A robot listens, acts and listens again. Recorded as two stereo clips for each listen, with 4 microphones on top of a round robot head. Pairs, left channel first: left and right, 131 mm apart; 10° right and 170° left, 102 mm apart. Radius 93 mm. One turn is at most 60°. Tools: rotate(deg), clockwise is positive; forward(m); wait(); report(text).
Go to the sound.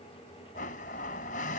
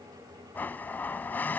rotate(-60)
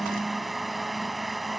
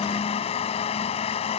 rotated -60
forward(1.0)
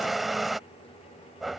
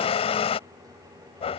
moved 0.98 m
forward(1.0)
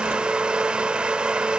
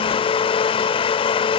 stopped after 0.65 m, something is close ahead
rotate(10)
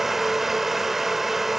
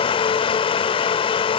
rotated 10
report("I am next to the blender.")